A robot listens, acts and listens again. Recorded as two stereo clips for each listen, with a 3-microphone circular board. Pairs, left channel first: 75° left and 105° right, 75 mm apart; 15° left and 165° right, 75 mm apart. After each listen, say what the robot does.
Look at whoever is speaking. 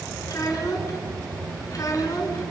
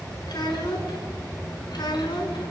Turn 35° left.
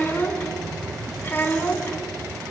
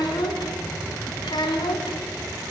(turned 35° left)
Turn 10° left.
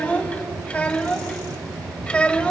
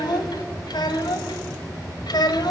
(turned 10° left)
Facing the child speaking, 1 to 2 m away.